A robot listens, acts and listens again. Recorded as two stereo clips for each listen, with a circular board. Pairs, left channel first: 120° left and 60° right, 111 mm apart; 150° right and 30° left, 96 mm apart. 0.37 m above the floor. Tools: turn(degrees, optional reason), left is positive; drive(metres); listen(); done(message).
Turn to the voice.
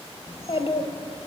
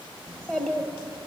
turn(degrees=130, reason="The child speaking: 130° left.")
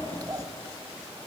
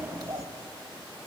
turn(degrees=-10, reason="The child speaking is now 10° right.")
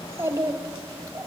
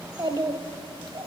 done("Facing the child speaking.")